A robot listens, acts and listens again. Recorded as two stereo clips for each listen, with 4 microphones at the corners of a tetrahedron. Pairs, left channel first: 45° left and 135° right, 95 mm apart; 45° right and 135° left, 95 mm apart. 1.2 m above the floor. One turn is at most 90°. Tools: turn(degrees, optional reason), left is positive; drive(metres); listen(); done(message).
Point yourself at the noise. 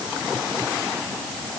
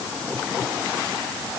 listen()
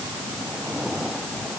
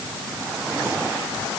listen()
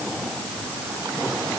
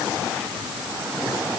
done("I can't make out anything.")